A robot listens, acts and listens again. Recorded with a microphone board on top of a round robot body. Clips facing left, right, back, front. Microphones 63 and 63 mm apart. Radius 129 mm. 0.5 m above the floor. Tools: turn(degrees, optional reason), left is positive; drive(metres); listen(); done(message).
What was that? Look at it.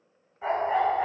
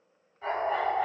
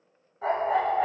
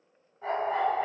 turn(degrees=155, reason="The dog barking: 155° left.")
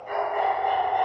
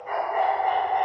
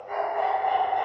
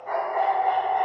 turn(degrees=-30, reason="The dog barking is now 30° right.")
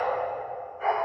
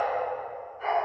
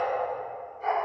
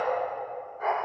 done("Facing the dog barking.")